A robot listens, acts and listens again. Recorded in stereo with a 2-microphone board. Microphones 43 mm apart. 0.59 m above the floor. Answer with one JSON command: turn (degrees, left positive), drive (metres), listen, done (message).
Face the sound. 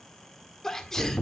{"turn": 30}
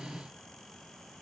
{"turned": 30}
{"listen": true}
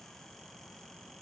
{"done": "I heard a sneeze, but can't make it out now. It was about 20° right or 140° left."}